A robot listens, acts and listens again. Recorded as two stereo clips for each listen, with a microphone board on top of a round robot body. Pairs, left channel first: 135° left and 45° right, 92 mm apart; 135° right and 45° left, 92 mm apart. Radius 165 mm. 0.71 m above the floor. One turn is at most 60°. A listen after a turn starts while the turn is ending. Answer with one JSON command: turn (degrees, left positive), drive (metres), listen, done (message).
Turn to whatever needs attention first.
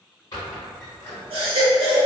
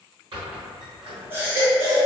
{"turn": -25}
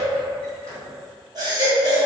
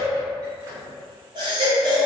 {"done": "Facing the baby crying, under 1 m away."}